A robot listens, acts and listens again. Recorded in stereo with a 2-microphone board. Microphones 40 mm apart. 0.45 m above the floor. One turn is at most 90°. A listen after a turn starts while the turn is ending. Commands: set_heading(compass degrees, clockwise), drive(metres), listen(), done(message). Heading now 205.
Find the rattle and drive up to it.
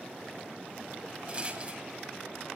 set_heading(230)
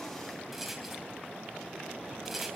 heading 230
drive(1.0)
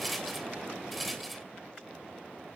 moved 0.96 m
drive(1.0)
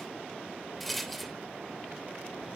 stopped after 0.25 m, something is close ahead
done("I am next to the rattle.")